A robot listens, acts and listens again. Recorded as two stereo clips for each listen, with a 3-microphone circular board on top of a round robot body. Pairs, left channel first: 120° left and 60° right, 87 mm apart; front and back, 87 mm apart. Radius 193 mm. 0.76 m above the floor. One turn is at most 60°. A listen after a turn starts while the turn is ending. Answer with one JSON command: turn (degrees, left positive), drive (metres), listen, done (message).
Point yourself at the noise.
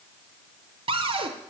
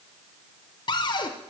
{"turn": -40}
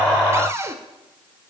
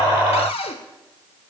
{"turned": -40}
{"done": "Found it: a cupboard door, straight ahead."}